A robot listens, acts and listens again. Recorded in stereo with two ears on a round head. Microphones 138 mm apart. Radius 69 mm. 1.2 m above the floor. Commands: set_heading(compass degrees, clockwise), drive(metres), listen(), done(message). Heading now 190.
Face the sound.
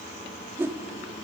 set_heading(205)
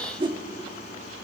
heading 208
set_heading(353)
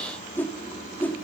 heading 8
set_heading(353)
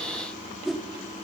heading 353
done("Facing the whoosh, 1 to 2 m away.")